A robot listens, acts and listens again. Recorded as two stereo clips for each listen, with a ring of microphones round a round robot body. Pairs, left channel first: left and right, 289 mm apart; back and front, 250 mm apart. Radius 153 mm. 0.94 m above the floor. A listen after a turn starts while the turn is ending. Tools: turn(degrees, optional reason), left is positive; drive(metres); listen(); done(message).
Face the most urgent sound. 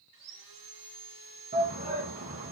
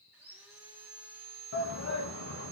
turn(degrees=-150, reason="The shout: 150° right.")
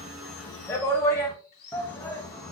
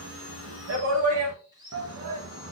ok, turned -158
turn(degrees=10, reason="The shout is now 10° left.")
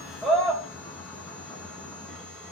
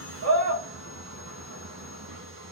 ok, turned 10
done("Facing the shout, 1 to 2 m away.")